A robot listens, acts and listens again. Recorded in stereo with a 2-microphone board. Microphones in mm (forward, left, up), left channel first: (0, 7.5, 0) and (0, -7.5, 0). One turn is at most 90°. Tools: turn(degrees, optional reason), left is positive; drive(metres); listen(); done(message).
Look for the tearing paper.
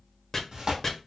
turn(degrees=-45, reason="The tearing paper: about 45° right or 135° right.")
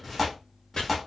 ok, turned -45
done("Found it: tearing paper, straight ahead.")